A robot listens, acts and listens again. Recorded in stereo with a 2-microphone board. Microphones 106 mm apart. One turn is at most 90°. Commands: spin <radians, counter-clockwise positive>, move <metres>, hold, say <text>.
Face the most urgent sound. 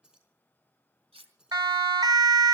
spin -0.70
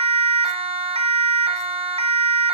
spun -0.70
spin -1.57
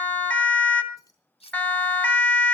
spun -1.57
spin 0.17
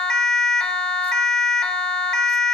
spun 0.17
say Found it: a siren, straight ahead, 2 to 4 m away.